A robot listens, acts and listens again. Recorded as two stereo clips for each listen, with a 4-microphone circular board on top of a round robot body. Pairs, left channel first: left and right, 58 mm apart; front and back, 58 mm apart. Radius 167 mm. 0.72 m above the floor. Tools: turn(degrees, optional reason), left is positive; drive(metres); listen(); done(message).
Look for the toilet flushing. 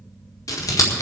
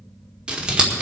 listen()
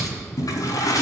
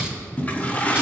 turn(degrees=65, reason="The toilet flushing: 65° left.")
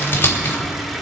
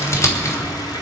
done("Facing the toilet flushing.")